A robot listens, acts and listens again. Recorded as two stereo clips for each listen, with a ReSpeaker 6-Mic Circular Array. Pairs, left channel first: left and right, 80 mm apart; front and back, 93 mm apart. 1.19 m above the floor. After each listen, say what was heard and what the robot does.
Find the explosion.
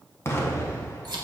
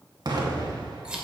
The explosion: 145° left. Turn 145° left.
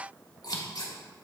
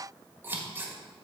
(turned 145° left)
I heard an explosion from this way, but can't make it out now.